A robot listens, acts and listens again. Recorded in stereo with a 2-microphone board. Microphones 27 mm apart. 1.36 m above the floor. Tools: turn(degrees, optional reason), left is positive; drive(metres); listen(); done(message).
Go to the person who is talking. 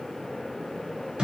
listen()
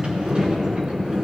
listen()
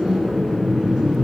done("I can't make out anyone speaking, only a sliding door.")